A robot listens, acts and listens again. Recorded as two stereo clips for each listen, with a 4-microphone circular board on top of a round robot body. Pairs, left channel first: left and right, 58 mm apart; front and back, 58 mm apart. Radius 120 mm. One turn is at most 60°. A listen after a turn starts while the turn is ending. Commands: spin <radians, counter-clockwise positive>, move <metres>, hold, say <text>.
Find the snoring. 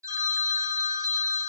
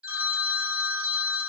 hold
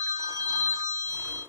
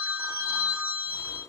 spin -0.52
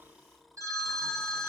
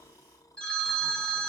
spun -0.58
say Found it: snoring, straight ahead.